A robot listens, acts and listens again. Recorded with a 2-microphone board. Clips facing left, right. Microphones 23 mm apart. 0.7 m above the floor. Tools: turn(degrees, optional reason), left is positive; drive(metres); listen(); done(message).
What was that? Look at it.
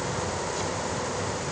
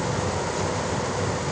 listen()
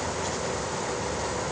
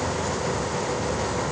listen()
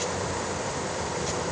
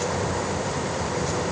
done("I can't make out anything to turn to.")